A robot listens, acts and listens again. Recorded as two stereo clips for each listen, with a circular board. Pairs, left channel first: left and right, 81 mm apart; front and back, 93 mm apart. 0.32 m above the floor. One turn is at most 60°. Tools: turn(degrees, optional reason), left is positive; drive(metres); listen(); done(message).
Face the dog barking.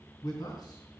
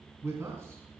listen()
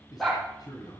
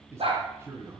turn(degrees=60, reason="The dog barking: 175° left.")
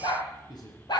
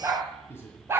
turn(degrees=60, reason="The dog barking is now 120° left.")
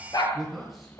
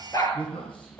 turn(degrees=50, reason="The dog barking is now 50° left.")
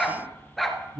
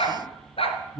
done("Facing the dog barking, 1 to 2 m away.")